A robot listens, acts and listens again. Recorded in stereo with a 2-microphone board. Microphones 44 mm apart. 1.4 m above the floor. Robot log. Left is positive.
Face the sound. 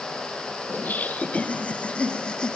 note: The laughter: about 20° left or 160° left.
cmd yaw +20
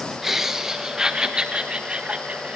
note: So it is at 30° right.
cmd yaw -30
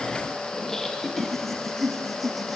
end: Found it: laughter, straight ahead, 2 to 4 m away.